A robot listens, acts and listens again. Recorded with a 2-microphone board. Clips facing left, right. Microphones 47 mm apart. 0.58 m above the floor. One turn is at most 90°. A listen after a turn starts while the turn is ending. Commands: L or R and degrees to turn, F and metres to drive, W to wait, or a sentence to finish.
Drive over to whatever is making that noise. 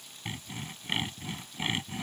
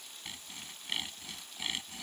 L30
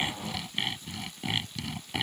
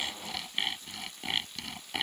F1.0
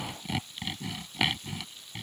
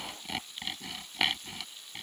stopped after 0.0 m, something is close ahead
Blocked. The sawing is further on, straight ahead.